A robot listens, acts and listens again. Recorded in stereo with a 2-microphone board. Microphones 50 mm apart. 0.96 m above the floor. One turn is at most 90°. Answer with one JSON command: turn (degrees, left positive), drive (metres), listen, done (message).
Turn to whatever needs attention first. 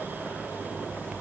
{"listen": true}
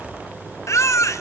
{"turn": 75}
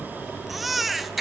{"done": "Found it: a baby crying, straight ahead, 1 to 2 m away."}